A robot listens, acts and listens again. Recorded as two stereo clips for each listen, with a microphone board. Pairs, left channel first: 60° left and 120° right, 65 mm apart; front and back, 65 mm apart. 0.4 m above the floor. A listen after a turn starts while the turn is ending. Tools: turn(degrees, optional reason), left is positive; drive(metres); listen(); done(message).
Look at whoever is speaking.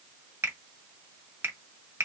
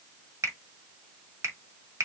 listen()
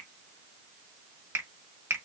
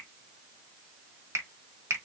listen()
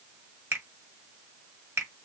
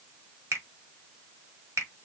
done("I can't make out anyone speaking, only a finger snap.")